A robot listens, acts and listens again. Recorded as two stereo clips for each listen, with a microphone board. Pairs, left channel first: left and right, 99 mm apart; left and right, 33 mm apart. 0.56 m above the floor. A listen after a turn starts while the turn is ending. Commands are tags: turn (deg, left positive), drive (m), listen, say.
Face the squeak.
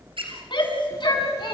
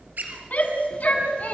<turn deg="-70"/>
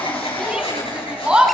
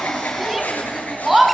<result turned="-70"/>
<listen/>
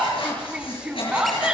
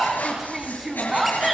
<listen/>
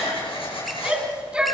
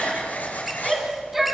<say>I heard a squeak, but can't make it out now. It was about straight ahead or 40° right.</say>